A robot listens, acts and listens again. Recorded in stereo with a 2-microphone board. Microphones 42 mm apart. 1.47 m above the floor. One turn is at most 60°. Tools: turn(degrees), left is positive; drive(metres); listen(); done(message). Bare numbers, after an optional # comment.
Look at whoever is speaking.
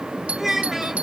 turn(-30)
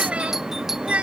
# So it is at 145° right.
turn(-60)
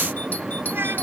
# Nothing new. It was at 85° right.
turn(-60)
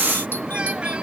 # Nothing new. It was at 25° right.
turn(-25)
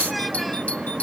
done("Facing where the child speaking came from. I can't hear it now.")